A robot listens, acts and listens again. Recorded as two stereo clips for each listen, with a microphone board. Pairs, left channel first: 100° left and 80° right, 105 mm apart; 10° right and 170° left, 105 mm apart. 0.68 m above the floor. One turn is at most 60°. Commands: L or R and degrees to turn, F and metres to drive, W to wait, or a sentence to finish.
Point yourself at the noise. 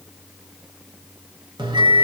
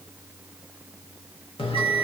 R35
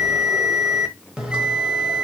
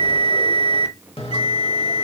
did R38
Facing the bell.